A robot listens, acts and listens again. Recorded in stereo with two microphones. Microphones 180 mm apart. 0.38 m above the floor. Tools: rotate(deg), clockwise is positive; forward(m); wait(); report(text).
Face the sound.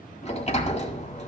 rotate(-40)
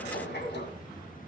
rotate(-100)
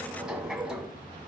report("Facing the sliding door, 1 to 2 m away.")